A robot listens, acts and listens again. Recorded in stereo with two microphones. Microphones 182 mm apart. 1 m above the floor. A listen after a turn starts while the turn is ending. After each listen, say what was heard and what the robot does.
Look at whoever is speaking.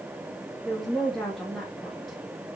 Turn 30° left.
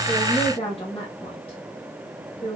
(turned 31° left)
So it is at 150° left. Turn 150° left.
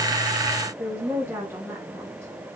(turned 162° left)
The woman speaking is now 15° right. Turn 15° right.
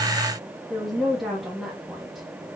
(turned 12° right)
Facing the woman speaking, 1 to 2 m away.